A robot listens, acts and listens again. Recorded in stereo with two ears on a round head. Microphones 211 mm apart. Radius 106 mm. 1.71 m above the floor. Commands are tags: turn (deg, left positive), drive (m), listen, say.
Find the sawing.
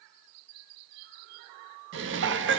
<listen/>
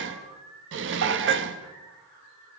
<listen/>
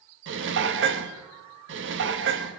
<say>I can't make out sawing to turn to.</say>